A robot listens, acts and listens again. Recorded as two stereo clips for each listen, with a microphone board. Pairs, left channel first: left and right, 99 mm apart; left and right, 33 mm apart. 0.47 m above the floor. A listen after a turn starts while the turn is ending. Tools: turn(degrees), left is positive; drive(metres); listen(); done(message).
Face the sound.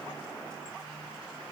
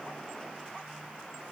listen()
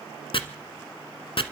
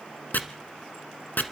turn(degrees=65)
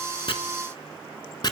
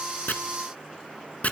turn(degrees=50)
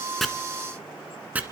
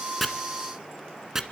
turn(degrees=-15)
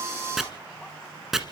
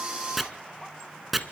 done("Found it: chopping, straight ahead, 1 to 2 m away.")